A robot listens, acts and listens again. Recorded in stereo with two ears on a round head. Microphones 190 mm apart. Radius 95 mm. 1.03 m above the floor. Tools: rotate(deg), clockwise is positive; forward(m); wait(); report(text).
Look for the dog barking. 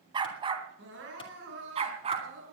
rotate(30)
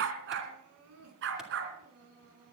rotate(120)
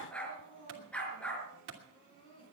report("Facing the dog barking, 2 to 4 m away.")